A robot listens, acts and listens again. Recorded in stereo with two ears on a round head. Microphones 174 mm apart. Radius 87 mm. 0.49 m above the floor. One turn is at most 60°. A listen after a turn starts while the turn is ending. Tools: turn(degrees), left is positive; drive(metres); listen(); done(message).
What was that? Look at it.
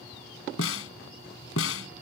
turn(degrees=60)
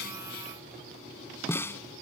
turn(degrees=10)
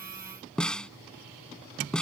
done("Facing the snare drum.")